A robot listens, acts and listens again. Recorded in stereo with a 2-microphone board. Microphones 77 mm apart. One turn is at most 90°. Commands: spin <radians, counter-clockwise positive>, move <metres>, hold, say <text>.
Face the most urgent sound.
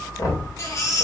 spin 0.79
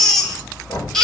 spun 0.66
say Found it: a baby crying, straight ahead, 2 to 4 m away.